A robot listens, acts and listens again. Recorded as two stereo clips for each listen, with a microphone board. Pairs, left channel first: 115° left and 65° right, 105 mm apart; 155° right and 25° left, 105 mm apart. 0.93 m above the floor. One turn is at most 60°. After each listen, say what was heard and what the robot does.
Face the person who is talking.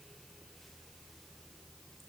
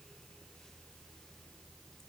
Keep listening.
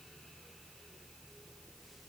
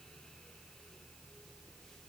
Keep listening.
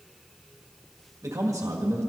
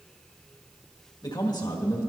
The man speaking: 120° right. Turn 60° right.
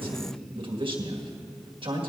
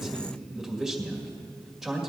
The man speaking is now 65° right. Turn 60° right.
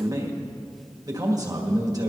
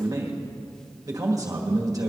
The man speaking is now 25° right. Turn 25° right.
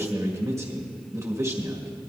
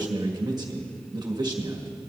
The man speaking is now 15° right. Turn 15° right.
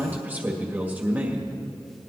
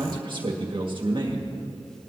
Facing the man speaking.